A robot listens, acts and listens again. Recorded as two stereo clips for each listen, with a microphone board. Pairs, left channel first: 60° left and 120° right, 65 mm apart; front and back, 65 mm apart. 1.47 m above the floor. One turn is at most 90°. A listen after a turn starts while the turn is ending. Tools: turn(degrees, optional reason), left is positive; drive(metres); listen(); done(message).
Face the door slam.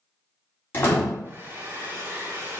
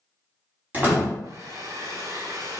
turn(degrees=90, reason="The door slam: 120° left.")
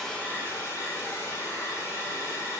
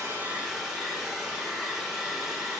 turn(degrees=30, reason="Nothing new. It was at 30° left.")
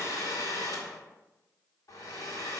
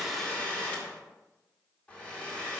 done("I heard a door slam from this way, but can't make it out now.")